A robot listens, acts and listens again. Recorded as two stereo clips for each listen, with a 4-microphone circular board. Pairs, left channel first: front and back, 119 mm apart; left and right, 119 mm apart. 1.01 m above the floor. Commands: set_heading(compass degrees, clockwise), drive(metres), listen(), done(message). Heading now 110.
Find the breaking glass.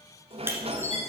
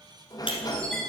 set_heading(355)
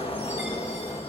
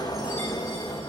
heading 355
done("I heard breaking glass from this way, but can't make it out now.")